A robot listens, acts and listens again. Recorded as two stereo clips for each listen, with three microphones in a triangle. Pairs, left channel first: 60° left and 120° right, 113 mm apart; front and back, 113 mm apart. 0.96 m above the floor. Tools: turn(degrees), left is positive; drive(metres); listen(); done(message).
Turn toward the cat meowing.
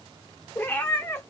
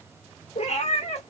turn(degrees=-10)
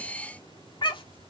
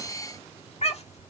turn(degrees=15)
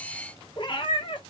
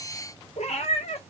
turn(degrees=20)
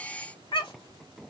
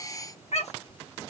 turn(degrees=15)
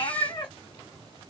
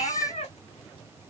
turn(degrees=15)
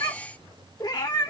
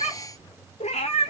done("Facing the cat meowing, 1 to 2 m away.")